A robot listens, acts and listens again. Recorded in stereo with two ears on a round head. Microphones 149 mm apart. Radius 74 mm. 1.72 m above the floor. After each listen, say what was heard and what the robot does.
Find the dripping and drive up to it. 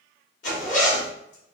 Keep listening.
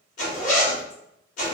Keep listening.
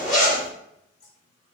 The dripping: about 55° left or 125° left. Turn 55° left.
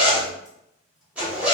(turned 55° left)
Keep listening.
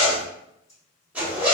So it is at 40° left. Turn 40° left.
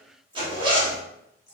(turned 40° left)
The dripping is now 20° left. Turn 20° left.
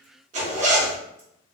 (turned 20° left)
Keep listening.
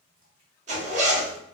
Keep listening.
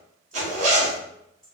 Drive 1.0 m forward.
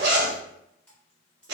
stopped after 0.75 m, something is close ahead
I am next to the dripping.